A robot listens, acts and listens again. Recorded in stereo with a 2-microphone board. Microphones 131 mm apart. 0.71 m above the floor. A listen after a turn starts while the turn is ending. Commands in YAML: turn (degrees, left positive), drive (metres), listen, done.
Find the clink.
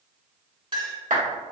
turn: -40
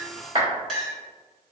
done: "Facing the clink."